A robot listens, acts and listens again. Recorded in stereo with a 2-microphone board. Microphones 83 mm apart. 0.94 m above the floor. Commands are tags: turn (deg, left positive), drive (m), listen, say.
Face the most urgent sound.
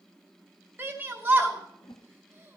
<turn deg="-25"/>
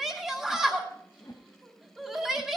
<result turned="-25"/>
<say>Facing the shout.</say>